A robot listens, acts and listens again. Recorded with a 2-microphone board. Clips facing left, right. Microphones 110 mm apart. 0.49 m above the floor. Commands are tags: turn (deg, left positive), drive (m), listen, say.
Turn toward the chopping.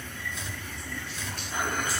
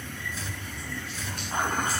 <turn deg="-30"/>
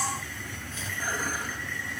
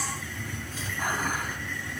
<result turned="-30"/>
<turn deg="-145"/>
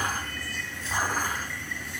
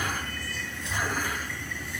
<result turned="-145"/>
<listen/>
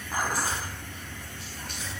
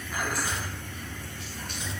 <say>Facing the chopping, over 4 m away.</say>